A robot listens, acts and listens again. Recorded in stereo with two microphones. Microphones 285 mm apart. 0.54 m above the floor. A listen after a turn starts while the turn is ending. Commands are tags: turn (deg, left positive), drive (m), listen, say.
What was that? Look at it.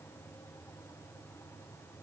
<listen/>
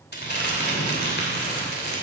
<turn deg="35"/>
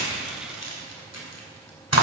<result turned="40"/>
<turn deg="100"/>
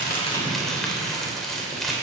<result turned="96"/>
<say>Found it: crumpling, straight ahead, 2 to 4 m away.</say>